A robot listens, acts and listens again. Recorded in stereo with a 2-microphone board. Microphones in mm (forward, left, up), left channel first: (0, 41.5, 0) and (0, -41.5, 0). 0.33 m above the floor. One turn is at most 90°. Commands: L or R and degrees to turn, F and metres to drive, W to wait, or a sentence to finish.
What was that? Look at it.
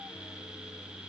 W
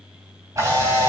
R40
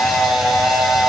Found it: a camera shutter, straight ahead.